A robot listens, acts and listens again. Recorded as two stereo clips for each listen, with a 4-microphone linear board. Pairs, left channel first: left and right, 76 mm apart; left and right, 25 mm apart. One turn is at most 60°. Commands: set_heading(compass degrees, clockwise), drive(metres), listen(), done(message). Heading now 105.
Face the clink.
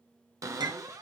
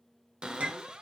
set_heading(165)
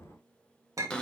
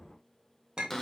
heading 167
set_heading(212)
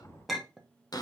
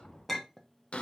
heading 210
done("Found it: a clink, straight ahead.")